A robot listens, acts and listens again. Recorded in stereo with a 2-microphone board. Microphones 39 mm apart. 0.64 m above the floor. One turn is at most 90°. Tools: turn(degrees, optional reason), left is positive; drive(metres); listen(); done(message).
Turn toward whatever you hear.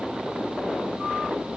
listen()
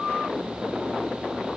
listen()
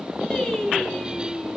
turn(degrees=30)
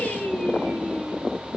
turn(degrees=90, reason="So it is at 155° left.")
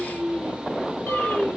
turn(degrees=65, reason="The singing is now 65° left.")
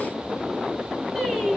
done("Found it: singing, straight ahead, 2 to 4 m away.")